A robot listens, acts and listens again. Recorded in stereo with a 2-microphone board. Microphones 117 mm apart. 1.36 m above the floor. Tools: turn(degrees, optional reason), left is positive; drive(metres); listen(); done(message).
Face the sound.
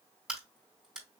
turn(degrees=-30)
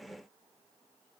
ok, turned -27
listen()
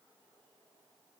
done("I heard a crack, but can't make it out now. It was about 20° left or 150° right.")